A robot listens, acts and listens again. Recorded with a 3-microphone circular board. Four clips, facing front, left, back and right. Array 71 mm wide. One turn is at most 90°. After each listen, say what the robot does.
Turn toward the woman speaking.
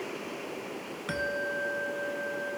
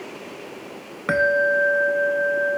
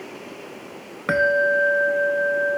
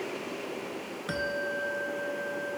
Keep listening.
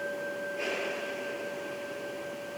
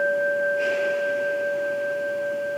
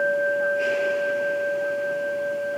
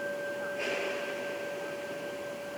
Keep listening.
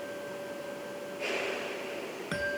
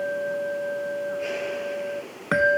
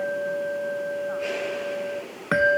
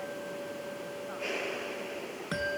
I can't make out a woman speaking to turn to.